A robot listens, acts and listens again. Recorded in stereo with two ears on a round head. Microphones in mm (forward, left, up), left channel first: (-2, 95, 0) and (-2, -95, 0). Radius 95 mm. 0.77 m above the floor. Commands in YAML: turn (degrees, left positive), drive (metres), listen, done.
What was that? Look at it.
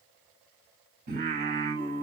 turn: -45
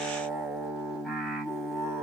done: "Found it: singing, straight ahead, 2 to 4 m away."